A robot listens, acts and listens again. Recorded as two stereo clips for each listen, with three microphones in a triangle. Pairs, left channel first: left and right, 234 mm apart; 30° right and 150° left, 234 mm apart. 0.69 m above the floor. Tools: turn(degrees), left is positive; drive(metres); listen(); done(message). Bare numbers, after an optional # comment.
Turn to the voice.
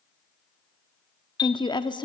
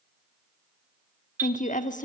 # The woman speaking: 20° left.
turn(20)
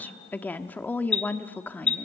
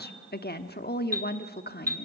# The woman speaking is now 10° left.
turn(10)
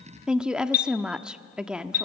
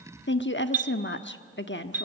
done("Facing the woman speaking, 1 to 2 m away.")